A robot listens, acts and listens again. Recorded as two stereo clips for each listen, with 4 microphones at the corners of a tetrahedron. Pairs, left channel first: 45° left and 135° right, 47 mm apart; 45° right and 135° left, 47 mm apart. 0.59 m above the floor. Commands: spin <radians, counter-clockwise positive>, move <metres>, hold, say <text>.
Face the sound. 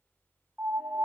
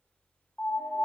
spin -1.57
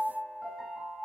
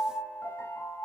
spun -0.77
spin -0.79
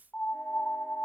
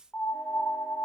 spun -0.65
say Facing the piano, under 1 m away.